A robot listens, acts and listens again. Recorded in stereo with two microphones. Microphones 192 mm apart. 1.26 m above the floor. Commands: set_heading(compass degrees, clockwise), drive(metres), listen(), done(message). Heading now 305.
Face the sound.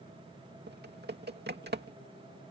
set_heading(5)
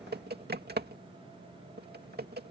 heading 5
set_heading(65)
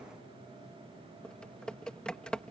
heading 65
done("Facing the typing on a keyboard.")